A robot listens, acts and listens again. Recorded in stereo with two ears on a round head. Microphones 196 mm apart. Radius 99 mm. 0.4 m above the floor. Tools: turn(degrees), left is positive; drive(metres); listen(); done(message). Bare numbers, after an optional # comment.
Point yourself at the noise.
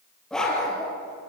turn(30)
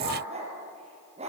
# So it is at 30° right.
turn(-30)
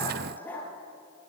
# The dog barking is now 10° left.
turn(10)
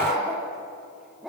done("Facing the dog barking.")